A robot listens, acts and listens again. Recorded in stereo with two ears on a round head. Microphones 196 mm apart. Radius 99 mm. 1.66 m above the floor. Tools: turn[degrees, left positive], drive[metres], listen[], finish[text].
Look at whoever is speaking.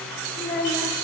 Thought: The child speaking: about 40° left or 140° left.
Action: turn[40]
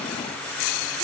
Action: listen[]
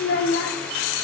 Thought: So it is at 90° left.
Action: turn[90]
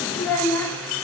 Thought: The child speaking is now 10° left.
Action: turn[10]
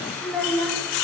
Action: finish[Found it: a child speaking, straight ahead.]